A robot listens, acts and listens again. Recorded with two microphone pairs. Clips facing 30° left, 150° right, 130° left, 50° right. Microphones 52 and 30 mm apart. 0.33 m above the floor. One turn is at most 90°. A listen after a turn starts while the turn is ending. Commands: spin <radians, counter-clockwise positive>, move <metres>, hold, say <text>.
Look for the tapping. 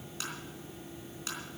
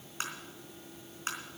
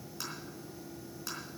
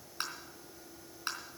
spin -1.57
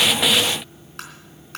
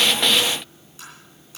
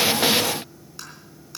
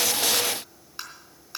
spin 0.35
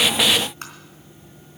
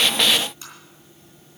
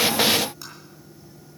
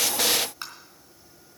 say Facing the tapping, 2 to 4 m away.